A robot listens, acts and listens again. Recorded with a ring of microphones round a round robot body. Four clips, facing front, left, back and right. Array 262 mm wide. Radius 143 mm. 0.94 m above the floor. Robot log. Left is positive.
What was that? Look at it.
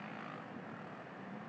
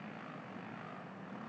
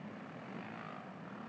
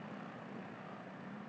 cmd idle
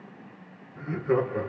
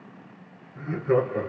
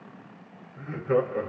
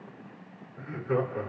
note: The laughter: 45° left.
cmd yaw +45
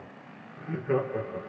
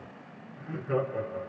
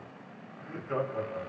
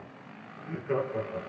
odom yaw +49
note: The laughter is now 15° right.
cmd yaw -15
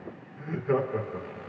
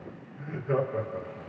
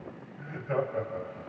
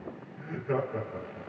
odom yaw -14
note: The laughter is now 10° right.
cmd yaw -10
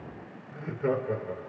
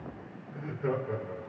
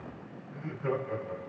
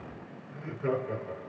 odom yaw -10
end: Facing the laughter.